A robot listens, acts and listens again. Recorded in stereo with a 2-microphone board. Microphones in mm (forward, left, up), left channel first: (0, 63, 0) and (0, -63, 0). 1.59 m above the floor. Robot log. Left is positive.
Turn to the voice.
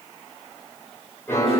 cmd idle
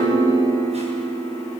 cmd idle
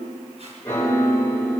end: I can't make out anyone speaking to turn to.